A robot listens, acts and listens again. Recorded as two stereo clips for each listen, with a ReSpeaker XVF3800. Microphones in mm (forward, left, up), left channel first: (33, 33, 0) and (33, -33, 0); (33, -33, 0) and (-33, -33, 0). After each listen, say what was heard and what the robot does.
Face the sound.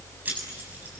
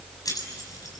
The keys jangling: 30° right. Turn 30° right.
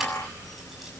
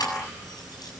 Keep listening.
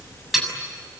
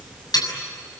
Found it: keys jangling, straight ahead.